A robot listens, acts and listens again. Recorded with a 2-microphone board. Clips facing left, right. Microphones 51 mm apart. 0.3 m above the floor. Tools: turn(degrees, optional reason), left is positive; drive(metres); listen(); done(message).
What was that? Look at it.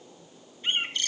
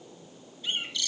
turn(degrees=45, reason="The bird: about 45° left or 135° left.")
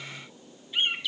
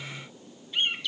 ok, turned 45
done("Facing the bird, 1 to 2 m away.")